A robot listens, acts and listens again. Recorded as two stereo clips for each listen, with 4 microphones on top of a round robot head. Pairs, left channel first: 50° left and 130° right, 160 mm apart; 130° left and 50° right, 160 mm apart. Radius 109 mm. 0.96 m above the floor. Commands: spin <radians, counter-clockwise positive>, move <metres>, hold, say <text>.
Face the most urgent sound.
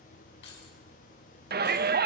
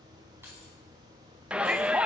spin -2.27
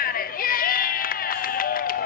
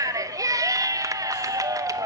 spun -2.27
spin 0.35
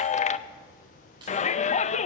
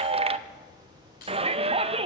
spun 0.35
say Found it: a shout, straight ahead, under 1 m away.